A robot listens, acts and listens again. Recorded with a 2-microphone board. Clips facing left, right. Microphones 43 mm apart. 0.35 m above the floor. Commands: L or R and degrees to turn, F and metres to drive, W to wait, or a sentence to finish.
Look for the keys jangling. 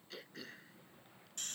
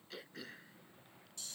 W
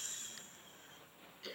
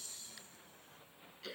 W
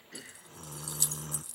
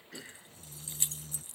R35
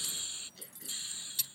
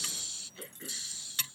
R110
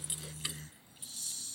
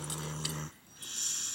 W
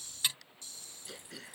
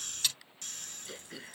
L20
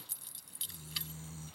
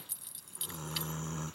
Found it: keys jangling, straight ahead.